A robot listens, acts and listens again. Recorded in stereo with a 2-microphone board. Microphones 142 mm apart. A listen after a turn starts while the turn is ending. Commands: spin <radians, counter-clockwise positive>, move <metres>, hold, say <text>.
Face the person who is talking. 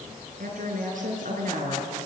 spin -1.22
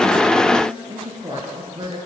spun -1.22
spin -0.61
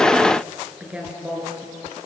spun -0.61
spin -0.17
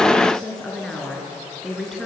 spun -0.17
say Facing the woman speaking, over 4 m away.